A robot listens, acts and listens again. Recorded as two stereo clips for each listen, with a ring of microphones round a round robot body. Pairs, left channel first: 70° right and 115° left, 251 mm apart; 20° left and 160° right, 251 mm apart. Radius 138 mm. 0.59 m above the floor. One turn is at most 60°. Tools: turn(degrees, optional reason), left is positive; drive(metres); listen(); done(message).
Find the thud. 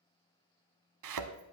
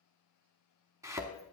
turn(degrees=60, reason="The thud: 125° left.")
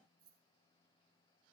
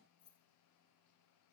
turn(degrees=60, reason="Nothing new. It was at 65° left.")
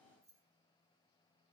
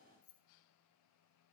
done("Facing where the thud came from. I can't hear it now.")